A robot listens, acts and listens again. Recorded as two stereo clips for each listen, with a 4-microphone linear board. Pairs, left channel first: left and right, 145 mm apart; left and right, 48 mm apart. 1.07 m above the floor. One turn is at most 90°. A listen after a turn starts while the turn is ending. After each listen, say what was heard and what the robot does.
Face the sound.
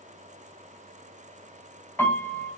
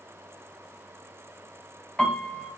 The piano: about 15° left or 165° left. Turn 15° left.
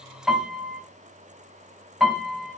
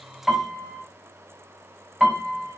Found it: a piano, straight ahead, 2 to 4 m away.